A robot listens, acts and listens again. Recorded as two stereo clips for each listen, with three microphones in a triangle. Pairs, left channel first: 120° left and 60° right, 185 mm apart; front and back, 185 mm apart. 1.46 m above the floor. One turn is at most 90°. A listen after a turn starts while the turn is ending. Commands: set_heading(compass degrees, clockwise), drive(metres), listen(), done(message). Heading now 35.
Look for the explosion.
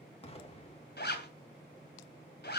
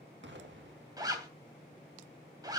set_heading(305)
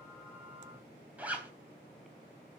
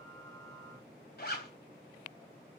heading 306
set_heading(216)
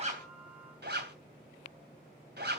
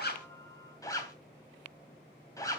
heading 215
done("I heard an explosion from this way, but can't make it out now.")